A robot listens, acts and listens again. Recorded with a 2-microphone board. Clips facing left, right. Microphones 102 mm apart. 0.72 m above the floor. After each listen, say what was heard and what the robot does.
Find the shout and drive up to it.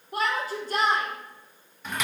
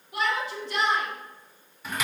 The shout: about 40° left or 140° left. Turn 40° left.
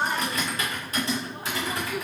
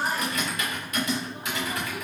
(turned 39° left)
So it is at 95° left. Turn 95° left.
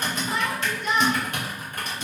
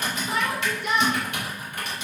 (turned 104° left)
Drive 1.0 m forward.
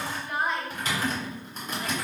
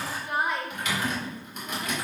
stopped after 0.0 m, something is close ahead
The shout is now 10° right. Turn 10° right.
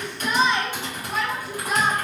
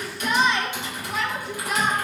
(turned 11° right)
Blocked. The shout is further on, straight ahead.